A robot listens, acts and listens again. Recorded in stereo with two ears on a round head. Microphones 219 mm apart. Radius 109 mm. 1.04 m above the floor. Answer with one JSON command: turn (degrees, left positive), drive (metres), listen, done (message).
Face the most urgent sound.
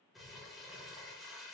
{"listen": true}
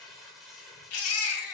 {"turn": 65}
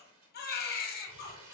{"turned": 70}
{"turn": 40}
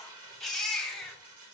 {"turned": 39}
{"done": "Facing the baby crying."}